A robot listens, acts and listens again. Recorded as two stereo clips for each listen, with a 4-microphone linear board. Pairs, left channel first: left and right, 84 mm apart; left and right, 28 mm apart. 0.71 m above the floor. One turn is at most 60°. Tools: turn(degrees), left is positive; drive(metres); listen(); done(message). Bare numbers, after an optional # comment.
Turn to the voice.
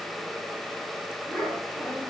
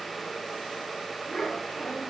turn(30)
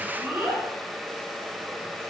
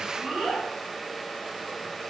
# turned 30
# So it is at 20° right.
turn(-20)
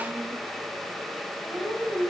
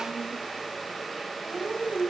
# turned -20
# The child speaking is now 10° right.
turn(-10)
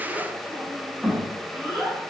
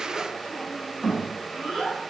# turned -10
done("Facing the child speaking, 1 to 2 m away.")